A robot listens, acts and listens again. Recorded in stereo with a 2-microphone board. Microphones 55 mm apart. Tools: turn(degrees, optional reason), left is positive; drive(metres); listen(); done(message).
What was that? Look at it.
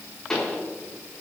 turn(degrees=30)
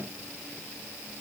listen()
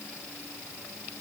done("I heard a pop, but can't make it out now. It was about 15° right or 135° left.")